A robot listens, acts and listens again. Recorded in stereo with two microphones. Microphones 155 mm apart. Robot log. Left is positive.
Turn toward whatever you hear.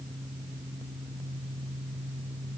cmd idle
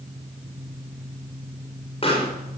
note: The pop: about 40° left or 140° left.
cmd yaw +40
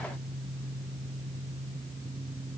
cmd idle
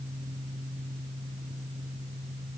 end: I heard a pop, but can't make it out now. It was about straight ahead or 100° left.